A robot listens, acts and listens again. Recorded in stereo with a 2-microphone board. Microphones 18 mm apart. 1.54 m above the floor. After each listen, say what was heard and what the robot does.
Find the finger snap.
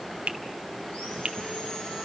The finger snap: about 65° right or 115° right. Turn 65° right.
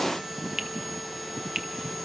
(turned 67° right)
So it is at 40° right. Turn 40° right.
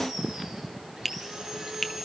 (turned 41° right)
Facing the finger snap.